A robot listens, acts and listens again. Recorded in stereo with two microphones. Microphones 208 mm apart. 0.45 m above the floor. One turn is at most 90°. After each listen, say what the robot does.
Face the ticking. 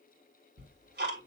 Turn 50° right.
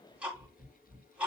Facing the ticking, 2 to 4 m away.